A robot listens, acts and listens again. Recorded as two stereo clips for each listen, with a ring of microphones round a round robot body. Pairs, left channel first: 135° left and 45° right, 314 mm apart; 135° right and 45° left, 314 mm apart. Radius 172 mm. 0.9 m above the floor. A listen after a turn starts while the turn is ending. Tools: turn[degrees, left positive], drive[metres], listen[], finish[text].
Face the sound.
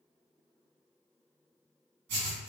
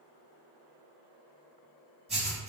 Thought: The writing: 25° right.
Action: turn[-25]
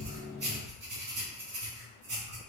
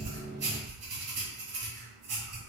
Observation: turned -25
Thought: The writing is now 10° left.
Action: turn[10]
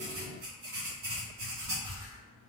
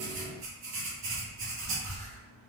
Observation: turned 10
Action: finish[Found it: writing, straight ahead, 2 to 4 m away.]